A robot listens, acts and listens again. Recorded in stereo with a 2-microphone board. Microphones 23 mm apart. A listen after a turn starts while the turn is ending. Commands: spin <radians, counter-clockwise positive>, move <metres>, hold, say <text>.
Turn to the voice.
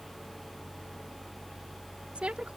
spin -1.13
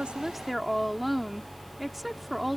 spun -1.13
say Facing the woman speaking.